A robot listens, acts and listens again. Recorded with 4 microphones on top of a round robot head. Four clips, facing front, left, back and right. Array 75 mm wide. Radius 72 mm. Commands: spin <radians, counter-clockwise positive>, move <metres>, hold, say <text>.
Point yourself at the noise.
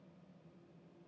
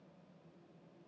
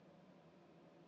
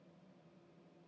hold
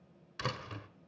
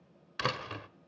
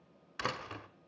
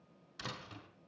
spin 2.09
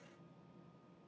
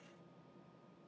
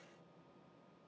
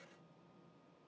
say Facing where the door slam came from. I can't hear it now.